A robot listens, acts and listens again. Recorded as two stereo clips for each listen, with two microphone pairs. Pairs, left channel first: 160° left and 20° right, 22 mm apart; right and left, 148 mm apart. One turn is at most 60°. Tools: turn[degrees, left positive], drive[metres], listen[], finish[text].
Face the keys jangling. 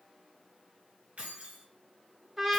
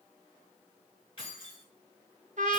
Thought: The keys jangling: 40° right.
Action: turn[-40]
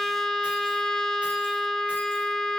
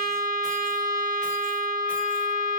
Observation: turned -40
Action: listen[]
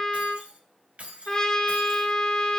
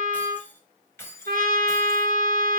Thought: The keys jangling is now 20° right.
Action: turn[-20]
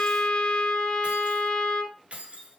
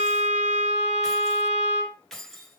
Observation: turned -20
Action: finish[Facing the keys jangling, 1 to 2 m away.]